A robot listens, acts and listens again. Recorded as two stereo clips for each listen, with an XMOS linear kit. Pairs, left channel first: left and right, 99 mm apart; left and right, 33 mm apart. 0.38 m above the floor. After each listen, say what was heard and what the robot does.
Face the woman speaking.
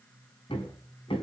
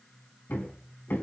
Keep listening.
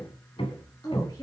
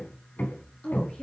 The woman speaking: about 35° left or 145° left. Turn 35° left.
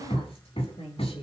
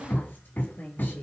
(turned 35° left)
So it is at 110° left. Turn 110° left.
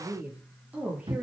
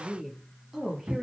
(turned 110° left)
The woman speaking is now 15° right. Turn 15° right.
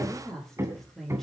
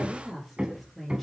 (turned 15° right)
Found it: a woman speaking, straight ahead, over 4 m away.